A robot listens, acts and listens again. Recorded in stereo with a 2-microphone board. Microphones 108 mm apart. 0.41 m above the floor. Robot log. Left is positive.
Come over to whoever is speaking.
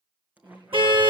note: The woman speaking: about 50° right or 130° right.
cmd yaw -50
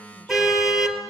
cmd idle
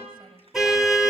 cmd idle
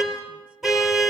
end: I heard a woman speaking, but can't make it out now. It was about straight ahead or 80° right. I did not reach it.